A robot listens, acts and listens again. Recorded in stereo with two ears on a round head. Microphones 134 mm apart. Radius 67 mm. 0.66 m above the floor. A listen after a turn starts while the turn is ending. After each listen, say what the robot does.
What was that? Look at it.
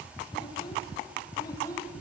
Turn 25° left.
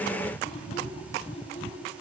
Turn 135° left.
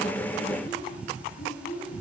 Turn 60° left.
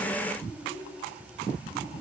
Turn 20° left.
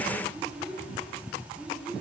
Found it: a child speaking, straight ahead.